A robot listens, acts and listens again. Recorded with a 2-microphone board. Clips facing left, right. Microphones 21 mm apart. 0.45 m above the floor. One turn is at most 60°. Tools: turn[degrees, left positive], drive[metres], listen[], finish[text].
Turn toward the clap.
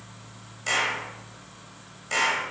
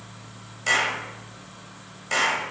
Action: turn[-30]
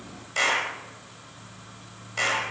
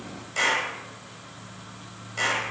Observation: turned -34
Thought: So it is at 20° left.
Action: turn[20]
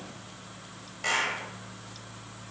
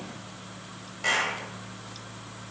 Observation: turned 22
Action: finish[Found it: a clap, straight ahead.]